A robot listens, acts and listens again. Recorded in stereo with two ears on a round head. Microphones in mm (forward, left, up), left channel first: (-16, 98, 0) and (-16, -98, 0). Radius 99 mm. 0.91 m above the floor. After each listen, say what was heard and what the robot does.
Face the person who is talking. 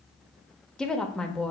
Turn 30° left.
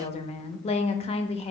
So it is at 150° left. Turn 150° left.
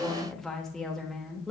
Facing the woman speaking.